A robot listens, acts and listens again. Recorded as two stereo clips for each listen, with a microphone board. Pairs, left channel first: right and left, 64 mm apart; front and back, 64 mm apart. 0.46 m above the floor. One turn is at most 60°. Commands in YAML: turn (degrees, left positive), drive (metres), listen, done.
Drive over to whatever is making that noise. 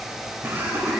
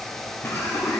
turn: 40
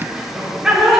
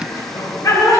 turn: 10
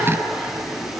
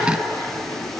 listen: true
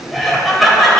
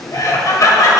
drive: 1.0
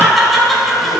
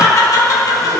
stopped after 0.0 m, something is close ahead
done: "Blocked. The laughter is further on, straight ahead."